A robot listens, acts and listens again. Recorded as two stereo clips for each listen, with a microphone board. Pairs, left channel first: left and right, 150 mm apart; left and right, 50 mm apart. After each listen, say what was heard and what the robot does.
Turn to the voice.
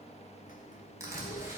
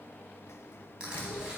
Keep listening.
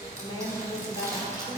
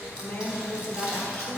The woman speaking: about 30° left or 150° left. Turn 30° left.
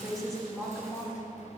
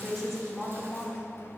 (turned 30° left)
Found it: a woman speaking, straight ahead, 2 to 4 m away.